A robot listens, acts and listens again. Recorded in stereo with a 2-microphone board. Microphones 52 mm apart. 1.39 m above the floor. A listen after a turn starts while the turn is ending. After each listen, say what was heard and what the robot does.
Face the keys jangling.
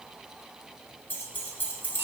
The keys jangling: about 40° left or 140° left. Turn 40° left.
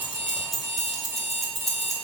Found it: keys jangling, straight ahead, 1 to 2 m away.